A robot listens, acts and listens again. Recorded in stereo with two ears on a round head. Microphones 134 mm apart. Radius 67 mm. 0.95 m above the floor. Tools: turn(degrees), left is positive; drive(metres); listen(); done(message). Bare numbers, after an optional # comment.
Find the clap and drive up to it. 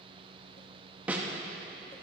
listen()
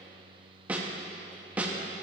listen()
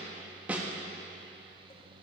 done("I can't make out a clap to turn to.")